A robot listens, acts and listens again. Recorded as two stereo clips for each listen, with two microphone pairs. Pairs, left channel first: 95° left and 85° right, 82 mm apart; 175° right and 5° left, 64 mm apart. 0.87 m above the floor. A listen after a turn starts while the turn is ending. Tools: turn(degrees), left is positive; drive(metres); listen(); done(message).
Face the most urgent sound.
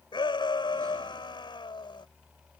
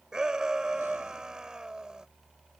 turn(degrees=85)
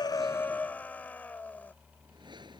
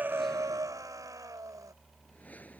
turn(degrees=25)
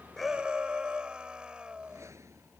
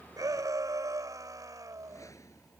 turn(degrees=-10)
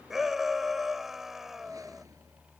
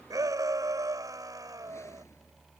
done("Facing the shout.")